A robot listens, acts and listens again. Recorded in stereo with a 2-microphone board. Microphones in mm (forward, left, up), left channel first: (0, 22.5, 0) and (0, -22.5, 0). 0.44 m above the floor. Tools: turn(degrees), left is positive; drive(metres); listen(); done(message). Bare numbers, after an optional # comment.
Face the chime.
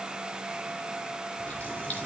listen()
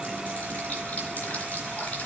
listen()
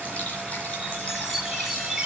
turn(-30)
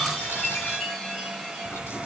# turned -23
# So it is at 10° left.
turn(10)
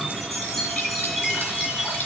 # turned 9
done("Facing the chime, 2 to 4 m away.")